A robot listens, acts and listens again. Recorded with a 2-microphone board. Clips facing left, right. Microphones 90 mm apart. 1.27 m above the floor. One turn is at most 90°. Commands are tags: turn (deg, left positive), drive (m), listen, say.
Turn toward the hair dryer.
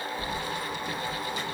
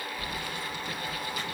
<listen/>
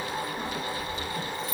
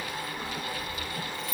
<listen/>
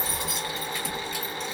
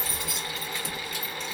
<say>I can't make out a hair dryer, only keys jangling.</say>